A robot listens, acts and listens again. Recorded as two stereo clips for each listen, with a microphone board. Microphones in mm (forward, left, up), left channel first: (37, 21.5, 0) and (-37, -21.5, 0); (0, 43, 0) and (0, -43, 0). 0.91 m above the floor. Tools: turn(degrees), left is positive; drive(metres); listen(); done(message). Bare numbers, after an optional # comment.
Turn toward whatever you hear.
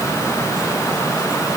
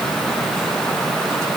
listen()
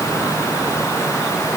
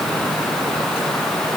listen()
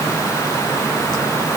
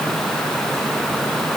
done("I can't make out anything.")